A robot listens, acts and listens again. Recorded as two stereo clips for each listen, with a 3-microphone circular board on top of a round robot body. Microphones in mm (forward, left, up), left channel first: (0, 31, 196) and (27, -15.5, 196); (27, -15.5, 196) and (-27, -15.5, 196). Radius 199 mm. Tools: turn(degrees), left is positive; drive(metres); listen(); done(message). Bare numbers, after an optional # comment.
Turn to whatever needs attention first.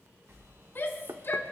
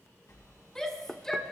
# The shout: 80° left.
turn(80)
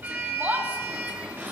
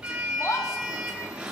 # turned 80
done("Found it: a shout, straight ahead, 1 to 2 m away.")